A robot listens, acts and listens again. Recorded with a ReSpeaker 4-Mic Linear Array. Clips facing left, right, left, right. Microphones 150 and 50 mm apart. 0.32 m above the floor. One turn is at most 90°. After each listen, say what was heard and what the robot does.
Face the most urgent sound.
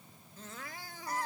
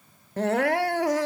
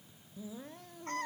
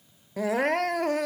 Turn 90° right.
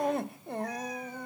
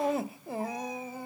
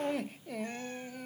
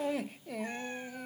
Found it: crying, straight ahead.